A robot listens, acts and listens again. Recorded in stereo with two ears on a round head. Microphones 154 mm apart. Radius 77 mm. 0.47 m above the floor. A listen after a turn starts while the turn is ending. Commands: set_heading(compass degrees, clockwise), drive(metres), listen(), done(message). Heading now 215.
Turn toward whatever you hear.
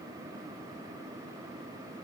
listen()
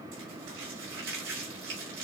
set_heading(305)
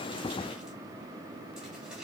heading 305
listen()
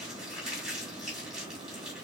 done("Found it: crumpling, straight ahead.")